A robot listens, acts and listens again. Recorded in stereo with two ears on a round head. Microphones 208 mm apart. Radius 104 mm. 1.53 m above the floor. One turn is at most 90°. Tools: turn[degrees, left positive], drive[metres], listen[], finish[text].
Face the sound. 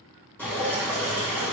Action: turn[30]
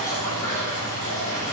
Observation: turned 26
Thought: So it is at 145° left.
Action: turn[90]
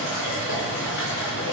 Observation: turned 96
Thought: The dripping is now 50° left.
Action: turn[50]
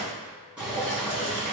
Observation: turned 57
Action: finish[Facing the dripping.]